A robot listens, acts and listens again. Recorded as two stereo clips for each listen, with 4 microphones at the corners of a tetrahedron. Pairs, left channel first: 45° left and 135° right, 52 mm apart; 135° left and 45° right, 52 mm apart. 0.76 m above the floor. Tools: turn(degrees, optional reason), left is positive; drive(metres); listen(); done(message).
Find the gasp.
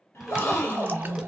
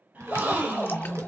turn(degrees=10, reason="The gasp: 10° left.")
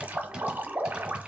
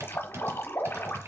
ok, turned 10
done("Facing where the gasp came from. I can't hear it now.")